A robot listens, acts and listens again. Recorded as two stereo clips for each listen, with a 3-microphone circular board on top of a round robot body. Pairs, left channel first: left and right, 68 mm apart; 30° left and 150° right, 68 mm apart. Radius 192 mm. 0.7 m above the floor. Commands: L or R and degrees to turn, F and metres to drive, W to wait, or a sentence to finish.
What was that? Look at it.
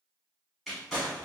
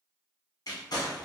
Found it: crumpling, straight ahead, 1 to 2 m away.